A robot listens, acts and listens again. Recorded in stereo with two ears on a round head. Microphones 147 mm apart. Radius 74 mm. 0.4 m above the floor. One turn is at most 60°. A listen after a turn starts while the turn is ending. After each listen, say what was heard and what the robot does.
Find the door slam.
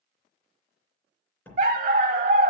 Turn 30° left.
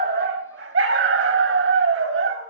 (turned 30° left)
Keep listening.
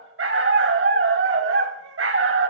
I heard a door slam, but can't make it out now. It was about 20° right or 140° left.